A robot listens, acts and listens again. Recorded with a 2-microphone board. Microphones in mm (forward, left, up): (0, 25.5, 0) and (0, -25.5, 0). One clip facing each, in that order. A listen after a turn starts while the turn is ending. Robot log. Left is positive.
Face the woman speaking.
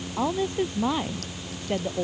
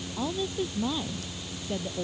note: The woman speaking: about 60° left or 120° left.
cmd yaw +60
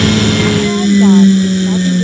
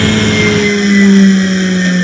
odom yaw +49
cmd idle
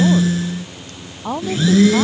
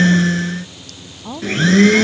note: So it is at 60° left.
cmd yaw +60
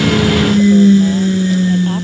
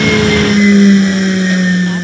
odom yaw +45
note: Nothing new. It was at 15° left.
cmd yaw +15
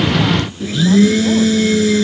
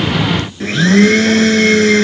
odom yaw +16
cmd idle
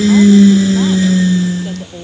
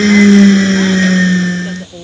end: Facing the woman speaking.